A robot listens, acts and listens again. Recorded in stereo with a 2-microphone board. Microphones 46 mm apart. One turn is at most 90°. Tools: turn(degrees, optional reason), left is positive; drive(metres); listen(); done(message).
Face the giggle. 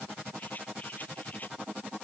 listen()
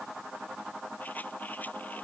listen()
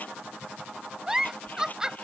turn(degrees=-15, reason="The giggle: about 15° right or 165° right.")
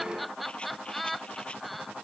done("Facing the giggle.")